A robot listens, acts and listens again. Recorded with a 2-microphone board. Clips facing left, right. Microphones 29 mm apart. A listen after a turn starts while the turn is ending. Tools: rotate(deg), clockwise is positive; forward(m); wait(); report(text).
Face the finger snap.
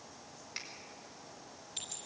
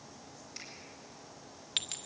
rotate(-35)
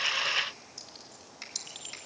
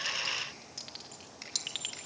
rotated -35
report("Found it: a finger snap, straight ahead, over 4 m away.")